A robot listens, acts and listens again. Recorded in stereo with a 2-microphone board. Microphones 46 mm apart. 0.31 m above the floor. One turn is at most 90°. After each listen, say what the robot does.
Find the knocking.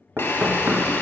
Turn 50° right.
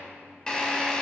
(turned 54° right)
Keep listening.
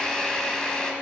Keep listening.
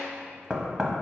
Turn 15° right.
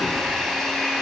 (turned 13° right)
Keep listening.
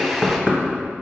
Found it: knocking, straight ahead, 1 to 2 m away.